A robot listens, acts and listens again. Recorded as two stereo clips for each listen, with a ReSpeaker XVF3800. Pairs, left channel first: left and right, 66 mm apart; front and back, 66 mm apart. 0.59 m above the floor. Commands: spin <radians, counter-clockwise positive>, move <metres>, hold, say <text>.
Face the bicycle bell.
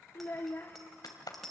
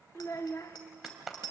say Facing the bicycle bell.